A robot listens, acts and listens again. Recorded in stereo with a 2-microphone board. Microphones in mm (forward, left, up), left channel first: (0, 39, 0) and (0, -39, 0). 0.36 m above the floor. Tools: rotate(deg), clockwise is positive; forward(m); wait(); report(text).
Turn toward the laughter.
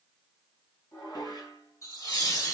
rotate(-45)
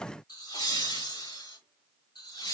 rotate(-70)
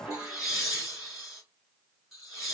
report("Found it: laughter, straight ahead, over 4 m away.")